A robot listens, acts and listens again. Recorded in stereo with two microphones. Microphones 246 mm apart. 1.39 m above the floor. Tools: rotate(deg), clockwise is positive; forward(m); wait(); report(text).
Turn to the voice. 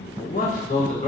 rotate(-30)
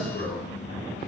rotate(-135)
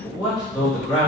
report("Found it: a man speaking, straight ahead.")